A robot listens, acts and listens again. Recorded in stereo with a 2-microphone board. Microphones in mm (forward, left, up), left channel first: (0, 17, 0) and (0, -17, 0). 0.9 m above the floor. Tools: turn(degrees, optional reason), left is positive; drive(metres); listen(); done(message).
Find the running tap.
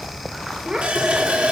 turn(degrees=-40, reason="The running tap: about 40° right or 140° right.")
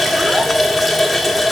done("Facing the running tap, 1 to 2 m away.")